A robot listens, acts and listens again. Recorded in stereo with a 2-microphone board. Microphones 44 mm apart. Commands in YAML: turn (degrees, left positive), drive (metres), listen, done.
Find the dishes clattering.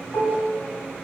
turn: 65
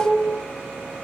done: "Found it: dishes clattering, straight ahead, 2 to 4 m away."